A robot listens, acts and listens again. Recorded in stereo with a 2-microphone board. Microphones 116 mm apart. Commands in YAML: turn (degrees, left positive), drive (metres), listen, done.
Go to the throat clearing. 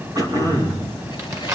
turn: -35
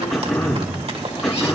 drive: 1.0
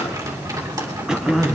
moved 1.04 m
drive: 1.0
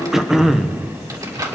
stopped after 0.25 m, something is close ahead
done: "I am next to the throat clearing."